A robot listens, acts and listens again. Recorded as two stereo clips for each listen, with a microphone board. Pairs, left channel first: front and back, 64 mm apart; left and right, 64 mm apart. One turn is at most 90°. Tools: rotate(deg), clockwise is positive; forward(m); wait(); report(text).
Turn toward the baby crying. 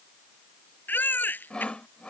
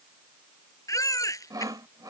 rotate(-60)
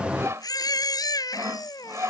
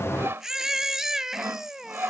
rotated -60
rotate(10)
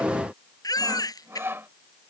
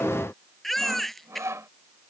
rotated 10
report("Found it: a baby crying, straight ahead.")